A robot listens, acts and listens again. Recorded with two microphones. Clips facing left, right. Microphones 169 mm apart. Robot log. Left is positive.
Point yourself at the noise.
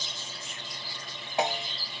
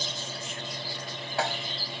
note: The snare drum: about 20° left or 160° left.
cmd yaw +20
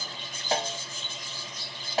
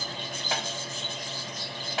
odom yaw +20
note: So it is at 135° left.
cmd yaw +135
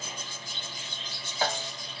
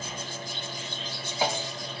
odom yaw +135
note: The snare drum is now 15° right.
cmd yaw -15
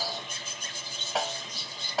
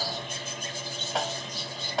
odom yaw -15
end: Facing the snare drum.